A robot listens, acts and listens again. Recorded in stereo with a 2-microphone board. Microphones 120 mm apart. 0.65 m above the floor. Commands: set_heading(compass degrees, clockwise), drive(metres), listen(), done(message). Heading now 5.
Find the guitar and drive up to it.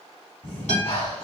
set_heading(290)
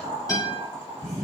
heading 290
set_heading(260)
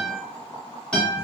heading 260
drive(1.0)
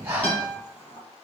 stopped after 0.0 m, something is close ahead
set_heading(250)
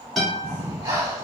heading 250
done("Something is in my way. I am facing the guitar but have not reached it.")